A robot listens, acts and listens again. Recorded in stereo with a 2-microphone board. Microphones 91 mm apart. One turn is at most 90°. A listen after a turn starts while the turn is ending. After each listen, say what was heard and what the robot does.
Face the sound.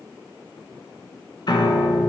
The piano: about 55° left or 125° left. Turn 55° left.
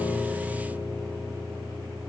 Found it: a piano, straight ahead, 1 to 2 m away.